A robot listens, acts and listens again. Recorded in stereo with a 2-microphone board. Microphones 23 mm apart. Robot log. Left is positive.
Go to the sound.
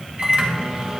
note: The microwave: about 55° right or 125° right.
cmd yaw -55
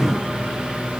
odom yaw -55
note: So it is at 70° right.
cmd yaw -70
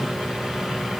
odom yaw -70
note: The microwave is now 10° right.
cmd yaw -10
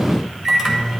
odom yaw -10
cmd fwd 1.0
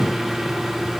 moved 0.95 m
note: The microwave is now 10° right.
cmd yaw -10
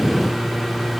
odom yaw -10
cmd fwd 1.0
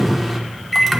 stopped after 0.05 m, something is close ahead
end: Arrived at the microwave, straight ahead.